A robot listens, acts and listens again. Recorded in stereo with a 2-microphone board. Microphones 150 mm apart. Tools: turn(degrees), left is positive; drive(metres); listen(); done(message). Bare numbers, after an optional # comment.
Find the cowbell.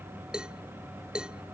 turn(-30)
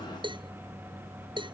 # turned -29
# So it is at 145° right.
turn(-145)
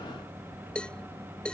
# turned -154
done("Found it: a cowbell, straight ahead.")